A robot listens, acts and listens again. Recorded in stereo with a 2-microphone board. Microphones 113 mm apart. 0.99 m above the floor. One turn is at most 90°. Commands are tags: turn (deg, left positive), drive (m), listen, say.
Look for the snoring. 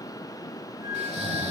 <turn deg="-90"/>
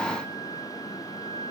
<listen/>
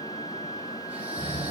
<turn deg="-10"/>
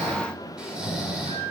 <say>Found it: snoring, straight ahead, 2 to 4 m away.</say>